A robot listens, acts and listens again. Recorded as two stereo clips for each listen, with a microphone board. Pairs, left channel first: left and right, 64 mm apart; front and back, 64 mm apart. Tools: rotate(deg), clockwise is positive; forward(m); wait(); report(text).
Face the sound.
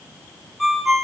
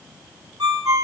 rotate(-180)
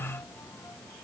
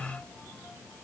wait()
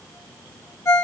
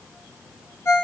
rotate(-45)
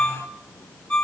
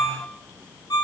rotate(-15)
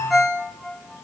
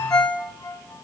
report("Found it: a ringtone, straight ahead.")